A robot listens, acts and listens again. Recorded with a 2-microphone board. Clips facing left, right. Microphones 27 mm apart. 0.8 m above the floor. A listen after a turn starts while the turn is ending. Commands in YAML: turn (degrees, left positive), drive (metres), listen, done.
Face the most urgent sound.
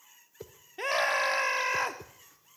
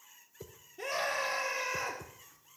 turn: 55
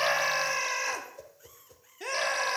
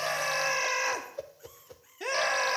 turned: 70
turn: -10
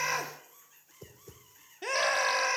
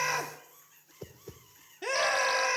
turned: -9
done: "Facing the scream."